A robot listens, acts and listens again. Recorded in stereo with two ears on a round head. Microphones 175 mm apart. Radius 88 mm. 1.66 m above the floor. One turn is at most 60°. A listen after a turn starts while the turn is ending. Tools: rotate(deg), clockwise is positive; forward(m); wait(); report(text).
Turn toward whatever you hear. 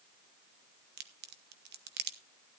rotate(55)
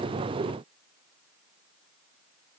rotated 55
wait()
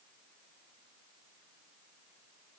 report("I heard a crack, but can't make it out now. It was about straight ahead or 70° right.")